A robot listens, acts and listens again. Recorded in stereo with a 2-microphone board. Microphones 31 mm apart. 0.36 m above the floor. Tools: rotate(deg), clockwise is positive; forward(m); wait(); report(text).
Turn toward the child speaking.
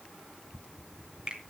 wait()
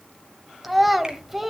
rotate(30)
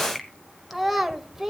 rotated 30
rotate(30)
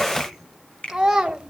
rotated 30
rotate(15)
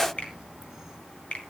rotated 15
wait()
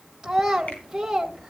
rotate(30)
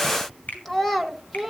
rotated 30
rotate(-15)
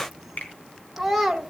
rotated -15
report("Facing the child speaking.")